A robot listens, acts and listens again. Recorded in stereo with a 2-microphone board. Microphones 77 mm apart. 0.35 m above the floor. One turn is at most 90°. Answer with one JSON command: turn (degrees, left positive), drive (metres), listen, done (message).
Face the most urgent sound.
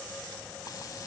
{"listen": true}
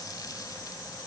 {"listen": true}
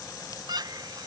{"turn": -60}
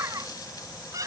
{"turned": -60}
{"turn": -50}
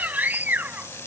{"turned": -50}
{"turn": -25}
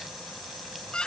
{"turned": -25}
{"turn": 10}
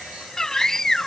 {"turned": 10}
{"done": "Facing the scream."}